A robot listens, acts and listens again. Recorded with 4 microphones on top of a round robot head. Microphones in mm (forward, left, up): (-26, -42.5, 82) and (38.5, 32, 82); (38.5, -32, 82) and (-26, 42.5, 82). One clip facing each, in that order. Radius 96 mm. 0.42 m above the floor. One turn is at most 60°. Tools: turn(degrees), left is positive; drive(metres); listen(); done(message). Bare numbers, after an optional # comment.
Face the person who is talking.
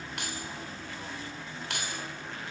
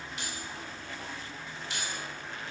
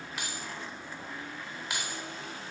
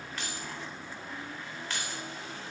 listen()
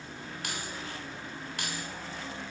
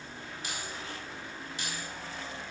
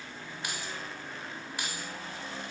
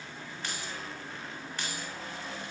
listen()
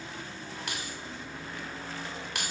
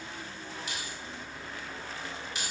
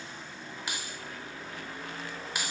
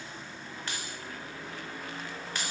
done("I can't make out anyone speaking to turn to.")